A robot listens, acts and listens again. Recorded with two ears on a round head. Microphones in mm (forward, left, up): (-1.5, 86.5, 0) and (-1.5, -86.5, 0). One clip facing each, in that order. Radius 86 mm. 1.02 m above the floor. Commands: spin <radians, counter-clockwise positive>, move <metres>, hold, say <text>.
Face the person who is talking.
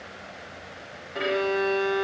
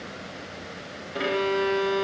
hold
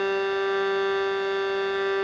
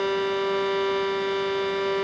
hold
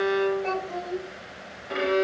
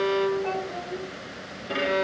spin 0.35
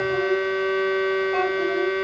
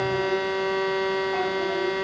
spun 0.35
hold
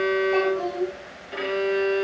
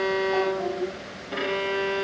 spin 2.44
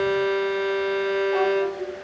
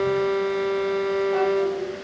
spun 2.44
hold
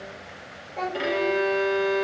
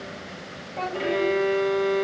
say Facing the child speaking, 2 to 4 m away.